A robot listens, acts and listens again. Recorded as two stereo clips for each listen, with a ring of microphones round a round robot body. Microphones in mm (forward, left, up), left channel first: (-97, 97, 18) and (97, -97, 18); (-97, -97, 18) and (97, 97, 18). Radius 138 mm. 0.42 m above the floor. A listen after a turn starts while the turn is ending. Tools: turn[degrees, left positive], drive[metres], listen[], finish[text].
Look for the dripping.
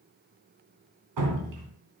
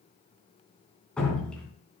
Thought: The dripping: 50° right.
Action: turn[-50]
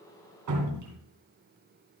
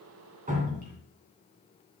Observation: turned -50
Thought: The dripping is now 15° right.
Action: turn[-15]
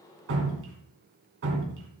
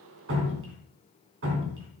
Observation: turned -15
Action: finish[Found it: dripping, straight ahead.]